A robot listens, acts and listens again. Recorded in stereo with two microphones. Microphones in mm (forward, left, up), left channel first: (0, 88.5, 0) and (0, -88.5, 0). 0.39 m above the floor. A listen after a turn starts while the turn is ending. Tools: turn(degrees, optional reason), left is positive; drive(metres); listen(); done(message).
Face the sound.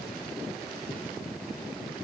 listen()
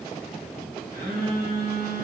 turn(degrees=-60, reason="The phone buzzing: about 60° right or 120° right.")
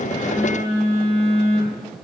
turn(degrees=-45, reason="So it is at 45° right.")
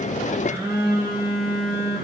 turn(degrees=-20, reason="The phone buzzing is now 20° right.")
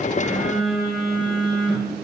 done("Found it: a phone buzzing, straight ahead, 1 to 2 m away.")